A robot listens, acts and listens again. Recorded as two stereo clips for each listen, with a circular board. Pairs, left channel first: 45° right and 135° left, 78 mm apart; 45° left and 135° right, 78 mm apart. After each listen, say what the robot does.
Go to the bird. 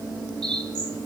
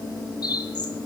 Turn 25° left.
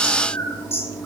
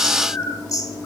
Drive 1.0 m forward.
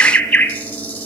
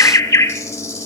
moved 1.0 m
Drive 1.0 m forward.
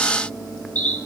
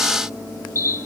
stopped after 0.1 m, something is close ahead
Turn 10° left.
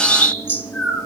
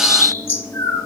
Arrived at the bird, straight ahead.